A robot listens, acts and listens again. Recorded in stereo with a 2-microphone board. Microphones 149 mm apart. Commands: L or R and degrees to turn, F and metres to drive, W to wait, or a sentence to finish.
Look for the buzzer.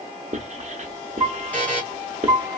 L30
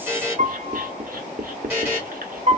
R20
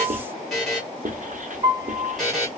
Facing the buzzer, 1 to 2 m away.